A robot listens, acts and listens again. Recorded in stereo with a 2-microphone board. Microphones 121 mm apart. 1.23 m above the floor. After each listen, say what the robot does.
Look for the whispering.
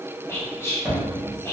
Turn 25° left.
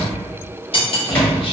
Keep listening.
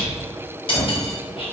Keep listening.
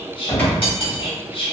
Turn 130° left.
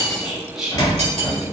Facing the whispering, 1 to 2 m away.